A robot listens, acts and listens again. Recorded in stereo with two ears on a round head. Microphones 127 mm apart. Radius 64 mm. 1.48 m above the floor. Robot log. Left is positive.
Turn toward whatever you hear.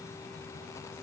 cmd idle
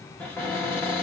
cmd yaw +30
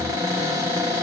note: So it is at 25° right.
cmd yaw -25
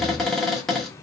end: Found it: a cupboard door, straight ahead.